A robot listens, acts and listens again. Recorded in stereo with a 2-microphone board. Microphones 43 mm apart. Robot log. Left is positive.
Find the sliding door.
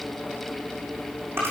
cmd idle
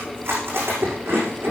cmd idle
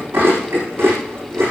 end: I can't make out a sliding door, only chewing.